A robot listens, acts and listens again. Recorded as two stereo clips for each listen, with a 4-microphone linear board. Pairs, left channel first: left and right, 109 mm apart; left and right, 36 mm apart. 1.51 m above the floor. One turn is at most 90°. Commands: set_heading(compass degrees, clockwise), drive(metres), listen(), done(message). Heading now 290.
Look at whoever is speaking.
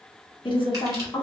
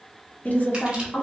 set_heading(240)
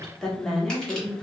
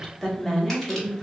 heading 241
done("Facing the woman speaking, 1 to 2 m away.")